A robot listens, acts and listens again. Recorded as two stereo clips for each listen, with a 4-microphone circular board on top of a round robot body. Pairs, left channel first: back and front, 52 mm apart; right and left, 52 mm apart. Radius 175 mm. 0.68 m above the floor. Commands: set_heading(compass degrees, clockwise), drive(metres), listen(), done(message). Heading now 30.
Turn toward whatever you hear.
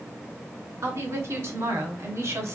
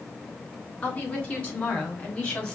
set_heading(45)
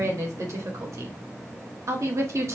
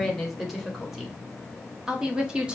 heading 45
set_heading(25)
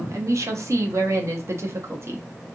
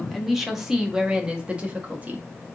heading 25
set_heading(355)
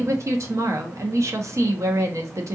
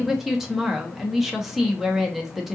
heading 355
done("Facing the woman speaking, 1 to 2 m away.")